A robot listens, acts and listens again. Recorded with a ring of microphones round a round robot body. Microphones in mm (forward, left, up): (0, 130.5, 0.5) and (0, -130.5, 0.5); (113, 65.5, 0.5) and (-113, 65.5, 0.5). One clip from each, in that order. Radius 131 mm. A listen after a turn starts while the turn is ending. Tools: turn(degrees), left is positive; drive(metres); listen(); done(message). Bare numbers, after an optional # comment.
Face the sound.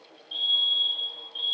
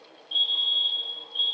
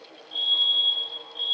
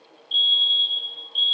# The fire alarm: 175° right.
turn(-175)
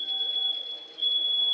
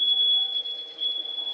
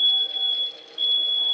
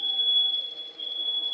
done("Facing the fire alarm, 2 to 4 m away.")